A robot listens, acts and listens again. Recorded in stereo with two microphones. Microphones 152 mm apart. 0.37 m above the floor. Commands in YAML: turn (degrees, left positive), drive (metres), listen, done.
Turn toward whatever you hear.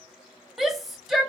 turn: 30
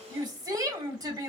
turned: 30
turn: -30
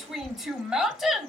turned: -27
done: "Found it: a shout, straight ahead, 1 to 2 m away."